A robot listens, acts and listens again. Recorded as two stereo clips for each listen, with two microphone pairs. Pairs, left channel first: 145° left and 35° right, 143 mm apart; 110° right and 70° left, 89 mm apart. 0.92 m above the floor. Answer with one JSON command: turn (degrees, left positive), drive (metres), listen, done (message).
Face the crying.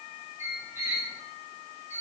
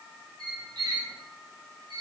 {"listen": true}
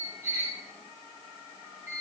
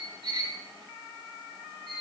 {"listen": true}
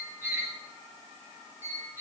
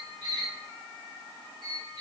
{"done": "I can't make out crying to turn to."}